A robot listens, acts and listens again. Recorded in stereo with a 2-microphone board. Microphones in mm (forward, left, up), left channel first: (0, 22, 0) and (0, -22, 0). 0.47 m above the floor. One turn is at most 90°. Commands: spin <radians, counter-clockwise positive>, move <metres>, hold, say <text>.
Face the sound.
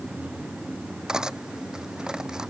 spin -0.26
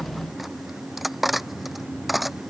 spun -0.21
say Facing the cutlery clinking.